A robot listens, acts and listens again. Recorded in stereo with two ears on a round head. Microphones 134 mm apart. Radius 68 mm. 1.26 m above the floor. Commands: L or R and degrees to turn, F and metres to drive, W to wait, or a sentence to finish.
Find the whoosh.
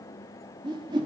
R30
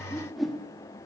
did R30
Facing the whoosh.